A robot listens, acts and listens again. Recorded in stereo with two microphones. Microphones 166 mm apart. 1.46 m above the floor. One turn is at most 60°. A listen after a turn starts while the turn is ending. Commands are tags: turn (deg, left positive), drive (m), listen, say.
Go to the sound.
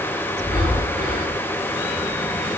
<turn deg="-60"/>
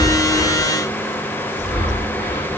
<turn deg="-10"/>
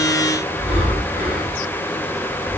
<drive m="1.0"/>
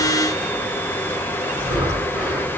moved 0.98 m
<turn deg="-15"/>
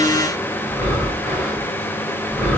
<drive m="1.0"/>
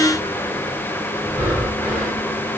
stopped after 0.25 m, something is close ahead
<say>Arrived at the breathing, straight ahead.</say>